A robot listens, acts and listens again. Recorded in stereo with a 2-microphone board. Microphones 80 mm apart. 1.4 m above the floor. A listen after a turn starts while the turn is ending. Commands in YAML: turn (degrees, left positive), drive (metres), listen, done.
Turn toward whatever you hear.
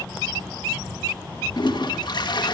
turn: 70
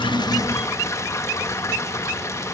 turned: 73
turn: 40
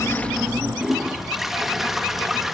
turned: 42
done: "Facing the toilet flushing."